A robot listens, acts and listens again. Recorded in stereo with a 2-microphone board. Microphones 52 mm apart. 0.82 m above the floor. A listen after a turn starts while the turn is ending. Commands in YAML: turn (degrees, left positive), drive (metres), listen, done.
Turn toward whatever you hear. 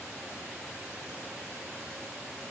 listen: true
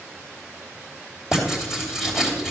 turn: -30
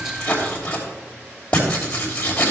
turn: 25
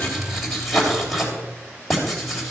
done: "Facing the writing, 2 to 4 m away."